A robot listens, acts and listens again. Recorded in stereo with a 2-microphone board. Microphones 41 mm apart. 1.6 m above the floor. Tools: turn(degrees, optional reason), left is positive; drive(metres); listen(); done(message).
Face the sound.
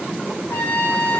turn(degrees=90)
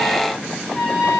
turn(degrees=10, reason="So it is at 10° left.")
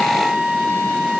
done("Facing the trumpet, 2 to 4 m away.")